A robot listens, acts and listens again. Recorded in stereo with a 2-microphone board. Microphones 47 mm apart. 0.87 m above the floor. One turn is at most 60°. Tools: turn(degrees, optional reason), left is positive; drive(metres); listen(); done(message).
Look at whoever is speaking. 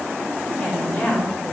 turn(degrees=25, reason="The woman speaking: about 25° left or 155° left.")
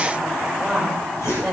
done("Found it: a woman speaking, straight ahead.")